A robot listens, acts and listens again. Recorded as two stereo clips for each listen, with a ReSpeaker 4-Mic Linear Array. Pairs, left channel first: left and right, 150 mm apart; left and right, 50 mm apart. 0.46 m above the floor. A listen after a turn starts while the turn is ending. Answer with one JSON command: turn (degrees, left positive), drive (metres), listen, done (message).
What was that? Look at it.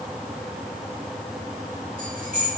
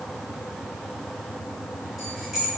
{"turn": -30}
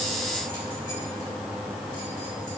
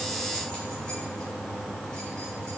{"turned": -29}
{"listen": true}
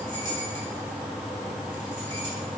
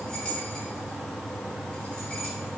{"listen": true}
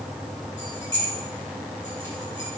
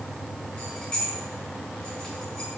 {"turn": 20}
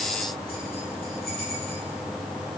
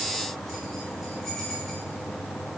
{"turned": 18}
{"listen": true}
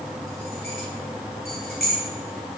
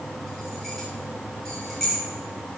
{"done": "Facing the keys jangling, 1 to 2 m away."}